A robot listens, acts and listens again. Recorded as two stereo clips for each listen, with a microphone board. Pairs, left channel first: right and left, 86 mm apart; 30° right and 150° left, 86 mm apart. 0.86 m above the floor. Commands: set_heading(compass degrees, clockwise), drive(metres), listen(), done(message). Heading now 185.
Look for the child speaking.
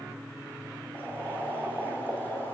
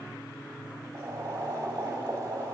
listen()
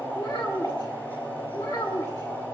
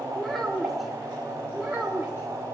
set_heading(325)
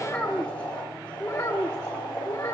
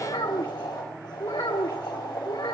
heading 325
set_heading(5)
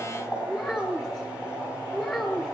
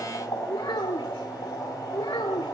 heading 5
set_heading(15)
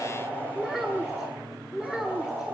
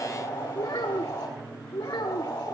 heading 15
done("Facing the child speaking, 1 to 2 m away.")